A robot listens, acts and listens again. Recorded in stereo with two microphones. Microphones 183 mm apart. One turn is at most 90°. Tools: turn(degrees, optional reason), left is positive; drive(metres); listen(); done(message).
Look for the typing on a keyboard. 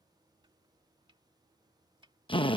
listen()
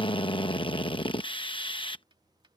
listen()
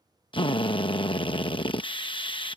done("I can't make out typing on a keyboard to turn to.")